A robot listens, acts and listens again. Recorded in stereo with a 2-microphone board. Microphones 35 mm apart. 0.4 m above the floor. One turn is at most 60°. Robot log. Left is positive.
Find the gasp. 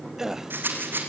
cmd yaw -30
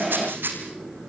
cmd idle
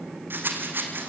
end: I heard a gasp, but can't make it out now. It was about 15° left or 135° right.